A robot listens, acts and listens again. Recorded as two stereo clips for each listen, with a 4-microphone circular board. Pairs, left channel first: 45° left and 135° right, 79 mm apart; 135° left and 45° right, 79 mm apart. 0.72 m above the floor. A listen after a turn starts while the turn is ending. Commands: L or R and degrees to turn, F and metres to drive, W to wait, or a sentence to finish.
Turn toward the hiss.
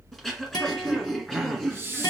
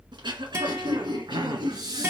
R75
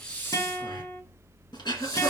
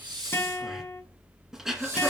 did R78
Found it: a hiss, straight ahead, 2 to 4 m away.